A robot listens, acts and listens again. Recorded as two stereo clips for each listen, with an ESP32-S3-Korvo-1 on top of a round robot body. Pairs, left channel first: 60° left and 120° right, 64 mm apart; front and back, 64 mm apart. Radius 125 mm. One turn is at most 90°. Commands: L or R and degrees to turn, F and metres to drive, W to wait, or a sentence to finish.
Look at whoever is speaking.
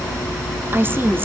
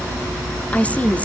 R65
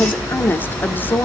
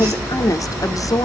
Facing the woman speaking.